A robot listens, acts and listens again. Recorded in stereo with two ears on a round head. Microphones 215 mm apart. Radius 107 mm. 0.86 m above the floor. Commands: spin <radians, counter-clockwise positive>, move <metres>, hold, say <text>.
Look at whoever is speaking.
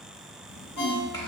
spin 0.26
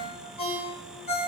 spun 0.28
hold
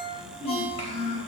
spin 2.53
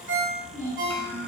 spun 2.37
spin 0.17
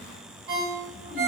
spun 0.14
hold
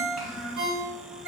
say Found it: a child speaking, straight ahead.